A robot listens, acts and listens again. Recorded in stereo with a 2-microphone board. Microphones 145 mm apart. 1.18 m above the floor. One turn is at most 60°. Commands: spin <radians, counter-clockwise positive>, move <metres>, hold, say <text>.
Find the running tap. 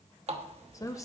spin -0.79
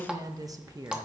say Found it: a running tap, straight ahead.